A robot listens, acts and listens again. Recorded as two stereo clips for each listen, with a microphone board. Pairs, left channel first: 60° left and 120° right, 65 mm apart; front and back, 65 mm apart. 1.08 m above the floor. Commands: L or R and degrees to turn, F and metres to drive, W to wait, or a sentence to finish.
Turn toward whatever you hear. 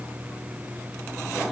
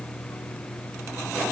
W
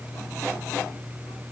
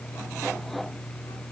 W
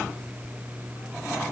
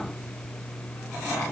I can't make out anything to turn to.